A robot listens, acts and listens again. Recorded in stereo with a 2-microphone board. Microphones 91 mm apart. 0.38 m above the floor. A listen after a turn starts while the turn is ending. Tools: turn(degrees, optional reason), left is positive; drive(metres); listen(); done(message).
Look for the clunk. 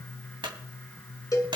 turn(degrees=-55, reason="The clunk: about 55° right or 125° right.")
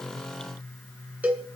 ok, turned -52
listen()
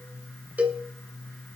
done("I heard a clunk, but can't make it out now. It was about 5° right or 70° right.")